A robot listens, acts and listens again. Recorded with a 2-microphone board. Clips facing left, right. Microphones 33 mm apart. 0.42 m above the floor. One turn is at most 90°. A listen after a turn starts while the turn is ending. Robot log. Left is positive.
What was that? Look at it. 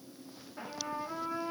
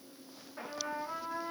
cmd yaw +30
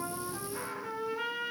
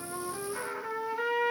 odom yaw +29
note: So it is at 30° right.
cmd yaw -30
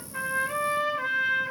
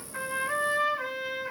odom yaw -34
end: Found it: a trumpet, straight ahead, 1 to 2 m away.